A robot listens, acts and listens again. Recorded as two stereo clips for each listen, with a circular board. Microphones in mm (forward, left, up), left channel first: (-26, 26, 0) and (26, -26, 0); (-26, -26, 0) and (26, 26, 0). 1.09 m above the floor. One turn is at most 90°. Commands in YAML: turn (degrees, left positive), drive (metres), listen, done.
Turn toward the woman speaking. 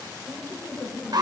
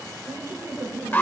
turn: 85
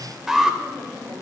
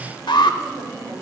turn: 25
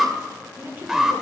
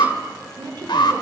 turn: 20
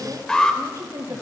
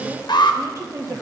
done: "Found it: a woman speaking, straight ahead, 1 to 2 m away."